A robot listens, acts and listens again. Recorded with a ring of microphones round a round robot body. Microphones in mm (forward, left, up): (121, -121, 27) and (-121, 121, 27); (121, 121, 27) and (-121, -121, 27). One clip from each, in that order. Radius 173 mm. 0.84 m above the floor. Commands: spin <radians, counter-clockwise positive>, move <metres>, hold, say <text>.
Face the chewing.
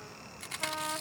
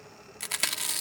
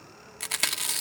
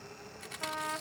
spin 1.40
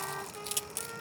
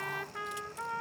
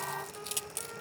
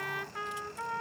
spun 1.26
spin 0.17
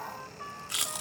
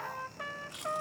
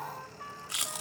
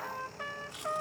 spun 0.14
say Found it: chewing, straight ahead.